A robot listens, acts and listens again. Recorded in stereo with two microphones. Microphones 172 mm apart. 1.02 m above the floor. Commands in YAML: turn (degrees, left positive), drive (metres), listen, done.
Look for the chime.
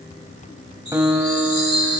turn: 90
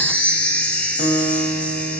turn: 10
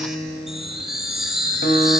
done: "Found it: a chime, straight ahead."